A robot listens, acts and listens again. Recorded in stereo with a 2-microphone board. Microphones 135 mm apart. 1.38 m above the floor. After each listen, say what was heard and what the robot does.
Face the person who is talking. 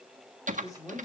The man speaking: about 25° left or 155° left. Turn 25° left.
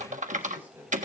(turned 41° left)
So it is at 15° right. Turn 15° right.
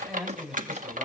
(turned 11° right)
Facing the man speaking, over 4 m away.